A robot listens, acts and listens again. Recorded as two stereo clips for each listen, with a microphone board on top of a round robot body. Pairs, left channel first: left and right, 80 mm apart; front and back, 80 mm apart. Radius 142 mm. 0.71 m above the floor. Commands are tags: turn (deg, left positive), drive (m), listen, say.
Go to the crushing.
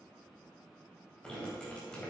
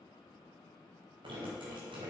<listen/>
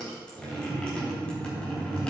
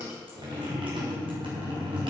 <listen/>
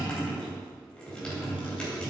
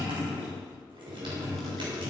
<say>I can't make out crushing, only dripping.</say>